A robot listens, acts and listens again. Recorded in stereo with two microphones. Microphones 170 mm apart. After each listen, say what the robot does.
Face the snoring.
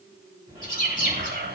Turn 30° right.
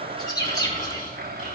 Turn 120° right.
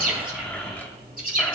Turn 35° right.
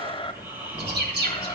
Turn 15° right.
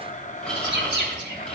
Facing the snoring, over 4 m away.